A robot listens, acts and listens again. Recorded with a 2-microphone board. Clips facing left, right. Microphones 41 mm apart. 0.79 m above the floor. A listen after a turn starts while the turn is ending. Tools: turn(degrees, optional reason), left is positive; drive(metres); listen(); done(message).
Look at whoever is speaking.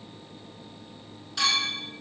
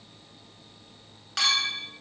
listen()
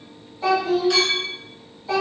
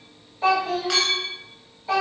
turn(degrees=-30, reason="The child speaking: about 30° right or 150° right.")
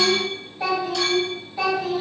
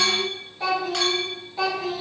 done("Facing the child speaking.")